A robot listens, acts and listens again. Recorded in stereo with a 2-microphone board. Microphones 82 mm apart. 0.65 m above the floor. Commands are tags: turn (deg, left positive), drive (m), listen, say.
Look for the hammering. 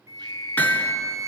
<turn deg="25"/>
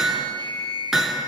<say>Facing the hammering.</say>